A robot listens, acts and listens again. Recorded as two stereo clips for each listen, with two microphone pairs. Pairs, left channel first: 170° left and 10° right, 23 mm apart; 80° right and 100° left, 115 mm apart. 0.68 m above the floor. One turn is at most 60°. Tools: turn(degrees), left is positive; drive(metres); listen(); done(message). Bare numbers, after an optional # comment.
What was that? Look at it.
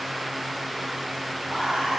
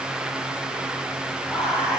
# The whispering: 15° left.
turn(15)
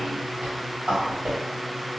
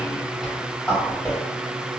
done("Found it: whispering, straight ahead, 1 to 2 m away.")